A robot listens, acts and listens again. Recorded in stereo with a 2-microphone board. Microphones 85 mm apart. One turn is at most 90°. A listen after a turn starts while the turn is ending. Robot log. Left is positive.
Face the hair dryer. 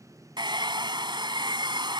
note: The hair dryer: about 65° right or 115° right.
cmd yaw -65
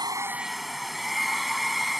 end: Found it: a hair dryer, straight ahead.